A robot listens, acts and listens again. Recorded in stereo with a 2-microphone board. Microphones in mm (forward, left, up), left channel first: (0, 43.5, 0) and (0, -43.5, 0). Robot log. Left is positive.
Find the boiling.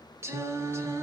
cmd idle
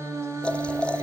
cmd yaw +30
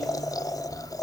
note: So it is at 135° left.
cmd yaw +135
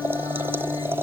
note: The boiling is now 25° right.
cmd yaw -25
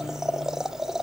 end: Facing the boiling.